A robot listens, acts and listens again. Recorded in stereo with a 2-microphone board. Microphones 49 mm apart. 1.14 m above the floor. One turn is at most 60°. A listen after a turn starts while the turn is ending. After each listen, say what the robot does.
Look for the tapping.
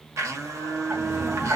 Turn 40° right.
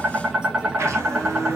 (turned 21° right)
Turn 20° right.
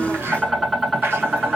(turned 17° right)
Found it: tapping, straight ahead.